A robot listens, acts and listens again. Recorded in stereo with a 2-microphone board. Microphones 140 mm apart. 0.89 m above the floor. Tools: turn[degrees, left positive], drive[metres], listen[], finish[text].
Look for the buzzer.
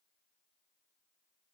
Action: listen[]
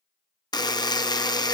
Thought: The buzzer: about 25° left or 155° left.
Action: turn[25]
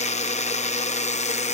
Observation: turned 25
Thought: So it is at 125° left.
Action: turn[125]
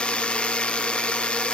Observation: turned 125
Thought: The buzzer is now 10° left.
Action: turn[10]
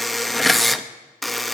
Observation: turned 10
Action: finish[Found it: a buzzer, straight ahead, under 1 m away.]